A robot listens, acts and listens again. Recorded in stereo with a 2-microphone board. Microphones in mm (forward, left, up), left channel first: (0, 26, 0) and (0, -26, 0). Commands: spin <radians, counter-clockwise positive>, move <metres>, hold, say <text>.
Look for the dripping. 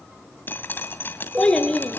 spin 0.70
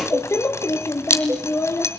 spin 1.57
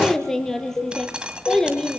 hold
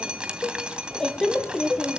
hold
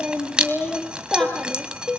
spin -0.35
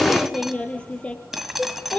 say Found it: dripping, straight ahead.